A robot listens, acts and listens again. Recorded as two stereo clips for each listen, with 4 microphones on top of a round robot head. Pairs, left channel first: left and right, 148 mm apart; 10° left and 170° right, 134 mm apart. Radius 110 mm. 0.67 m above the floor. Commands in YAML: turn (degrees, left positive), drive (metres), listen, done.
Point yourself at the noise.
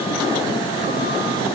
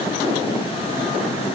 listen: true
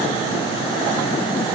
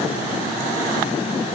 listen: true
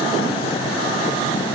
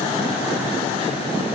done: "I can't make out anything to turn to."